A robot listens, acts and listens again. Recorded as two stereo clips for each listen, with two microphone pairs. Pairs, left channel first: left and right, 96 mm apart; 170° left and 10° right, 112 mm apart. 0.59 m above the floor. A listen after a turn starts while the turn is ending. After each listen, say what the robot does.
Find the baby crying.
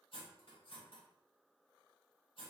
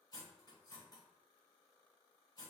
Keep listening.
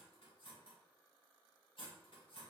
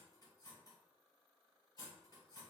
Keep listening.
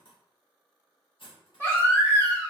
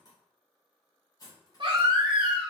Turn 25° left.
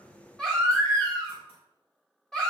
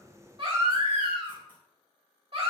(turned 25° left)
Turn 10° left.
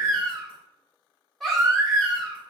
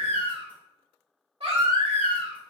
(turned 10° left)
Found it: a baby crying, straight ahead.